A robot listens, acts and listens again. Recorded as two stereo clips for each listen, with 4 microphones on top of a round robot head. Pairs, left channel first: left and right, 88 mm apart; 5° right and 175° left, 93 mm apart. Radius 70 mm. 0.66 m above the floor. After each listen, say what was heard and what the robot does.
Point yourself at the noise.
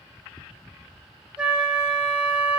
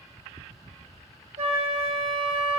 The flute: 165° right. Turn 165° right.
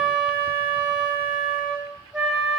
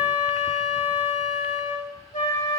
The flute is now 10° right. Turn 10° right.
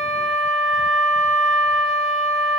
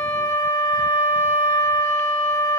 Facing the flute, 2 to 4 m away.